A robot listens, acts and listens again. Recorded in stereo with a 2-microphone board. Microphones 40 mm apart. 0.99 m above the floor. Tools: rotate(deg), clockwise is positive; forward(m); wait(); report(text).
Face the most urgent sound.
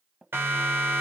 rotate(90)
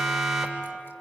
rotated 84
report("Found it: a siren, straight ahead.")